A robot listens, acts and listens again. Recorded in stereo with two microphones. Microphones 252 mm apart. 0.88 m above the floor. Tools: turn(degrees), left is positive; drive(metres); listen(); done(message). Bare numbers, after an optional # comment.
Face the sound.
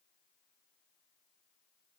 listen()
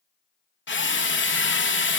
# The drill: about 50° left or 130° left.
turn(50)
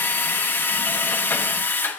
# So it is at 10° left.
turn(10)
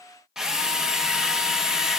done("Facing the drill, under 1 m away.")